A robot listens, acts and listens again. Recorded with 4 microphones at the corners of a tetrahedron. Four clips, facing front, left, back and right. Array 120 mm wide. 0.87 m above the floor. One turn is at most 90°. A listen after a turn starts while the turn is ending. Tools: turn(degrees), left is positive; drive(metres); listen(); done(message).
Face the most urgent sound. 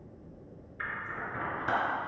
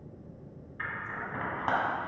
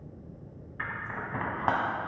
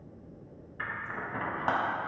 listen()
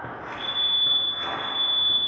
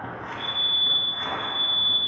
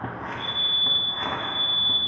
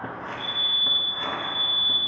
turn(degrees=65)
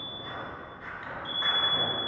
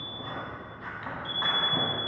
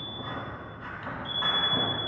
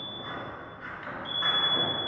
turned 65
done("Found it: a fire alarm, straight ahead, 2 to 4 m away.")